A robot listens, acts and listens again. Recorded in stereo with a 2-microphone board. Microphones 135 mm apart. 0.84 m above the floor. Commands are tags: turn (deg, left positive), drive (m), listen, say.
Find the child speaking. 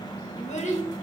<turn deg="60"/>
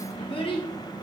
<turn deg="40"/>
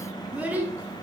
<turn deg="-15"/>
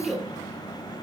<say>Facing the child speaking.</say>